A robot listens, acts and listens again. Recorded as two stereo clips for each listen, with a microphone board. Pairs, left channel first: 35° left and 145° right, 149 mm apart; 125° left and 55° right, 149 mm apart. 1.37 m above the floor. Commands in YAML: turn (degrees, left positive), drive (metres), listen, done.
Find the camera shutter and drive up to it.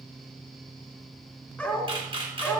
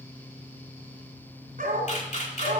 turn: 160
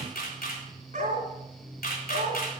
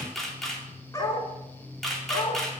turn: 35
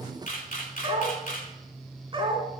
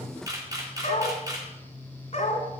turn: 10
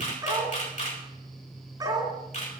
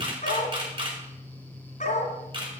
drive: 1.0
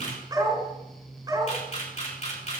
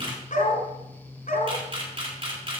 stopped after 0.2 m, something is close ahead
done: "Something is in my way. I am facing the camera shutter but have not reached it."